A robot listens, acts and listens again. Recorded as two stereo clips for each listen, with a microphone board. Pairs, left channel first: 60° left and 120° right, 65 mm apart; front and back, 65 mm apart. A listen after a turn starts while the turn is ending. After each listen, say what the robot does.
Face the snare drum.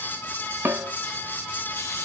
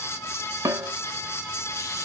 Turn 175° right.
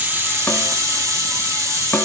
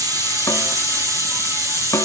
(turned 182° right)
Keep listening.
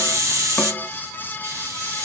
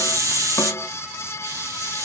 Keep listening.
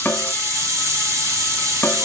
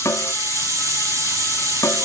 Turn 10° left.
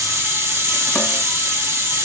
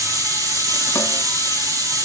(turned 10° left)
Keep listening.
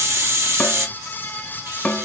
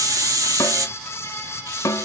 Facing the snare drum.